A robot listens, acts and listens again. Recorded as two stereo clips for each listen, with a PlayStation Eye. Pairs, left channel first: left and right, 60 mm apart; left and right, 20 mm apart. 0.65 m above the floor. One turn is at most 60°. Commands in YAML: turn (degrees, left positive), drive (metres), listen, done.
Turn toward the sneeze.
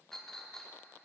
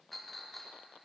listen: true
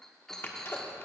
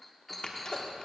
turn: 40
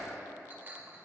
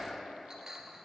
listen: true
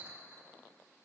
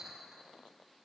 done: "I heard a sneeze, but can't make it out now. It was about straight ahead or 100° left."